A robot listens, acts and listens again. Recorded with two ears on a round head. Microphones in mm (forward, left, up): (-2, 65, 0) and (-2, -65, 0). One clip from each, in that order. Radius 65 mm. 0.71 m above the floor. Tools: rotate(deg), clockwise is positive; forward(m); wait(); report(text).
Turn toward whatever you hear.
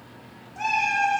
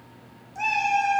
rotate(90)
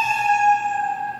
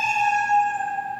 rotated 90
rotate(-20)
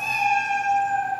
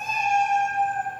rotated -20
rotate(-15)
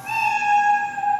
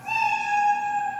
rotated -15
rotate(-10)
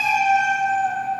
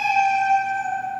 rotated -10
report("Facing the cat meowing, over 4 m away.")